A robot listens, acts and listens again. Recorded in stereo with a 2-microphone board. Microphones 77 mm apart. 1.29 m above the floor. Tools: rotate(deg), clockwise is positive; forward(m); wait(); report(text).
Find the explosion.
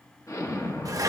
rotate(-45)
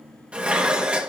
wait()
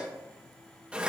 report("I heard an explosion, but can't make it out now. It was about straight ahead or 90° left.")